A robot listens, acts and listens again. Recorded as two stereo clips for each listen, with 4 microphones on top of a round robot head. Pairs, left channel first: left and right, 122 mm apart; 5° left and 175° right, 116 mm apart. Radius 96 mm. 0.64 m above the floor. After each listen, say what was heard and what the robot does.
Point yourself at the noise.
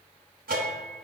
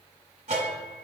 The bell: 120° right. Turn 120° right.
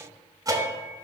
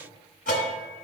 The bell is now 30° right. Turn 30° right.
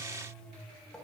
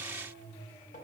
Facing the bell, under 1 m away.